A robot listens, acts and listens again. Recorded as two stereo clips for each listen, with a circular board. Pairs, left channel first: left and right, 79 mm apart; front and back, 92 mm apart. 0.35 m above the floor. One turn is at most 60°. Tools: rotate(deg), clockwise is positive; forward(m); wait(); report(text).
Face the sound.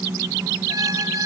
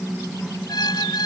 rotate(45)
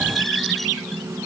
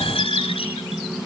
report("Found it: a squeak, straight ahead.")